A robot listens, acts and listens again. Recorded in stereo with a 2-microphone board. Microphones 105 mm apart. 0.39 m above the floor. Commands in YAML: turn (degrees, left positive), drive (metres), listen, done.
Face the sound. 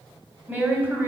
turn: -20
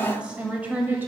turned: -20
turn: -20
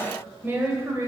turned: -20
turn: -30
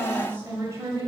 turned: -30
turn: -30
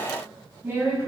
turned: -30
turn: -25
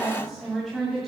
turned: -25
done: "Found it: a woman speaking, straight ahead, 2 to 4 m away."